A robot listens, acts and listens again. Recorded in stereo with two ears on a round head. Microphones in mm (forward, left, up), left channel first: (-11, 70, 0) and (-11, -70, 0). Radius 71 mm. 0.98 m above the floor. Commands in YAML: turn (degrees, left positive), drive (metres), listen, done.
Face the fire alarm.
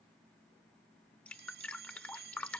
turn: -90
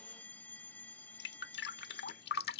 turn: 10
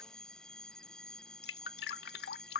done: "Facing the fire alarm."